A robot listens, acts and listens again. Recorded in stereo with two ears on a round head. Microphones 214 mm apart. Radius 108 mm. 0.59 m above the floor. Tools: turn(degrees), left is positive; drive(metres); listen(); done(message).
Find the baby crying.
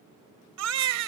turn(degrees=-90)
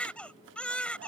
done("Facing the baby crying.")